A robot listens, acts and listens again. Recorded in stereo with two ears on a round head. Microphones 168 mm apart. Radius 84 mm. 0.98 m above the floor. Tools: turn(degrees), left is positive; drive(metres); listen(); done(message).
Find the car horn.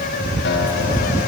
listen()
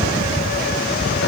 listen()
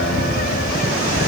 done("I can't make out a car horn to turn to.")